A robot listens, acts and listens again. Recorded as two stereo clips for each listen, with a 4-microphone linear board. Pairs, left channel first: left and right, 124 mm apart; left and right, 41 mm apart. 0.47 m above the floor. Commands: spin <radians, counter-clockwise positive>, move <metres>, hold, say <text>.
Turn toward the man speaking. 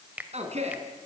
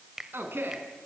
spin -0.96
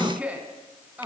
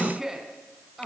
spin -0.26
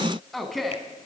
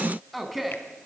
say Found it: a man speaking, straight ahead.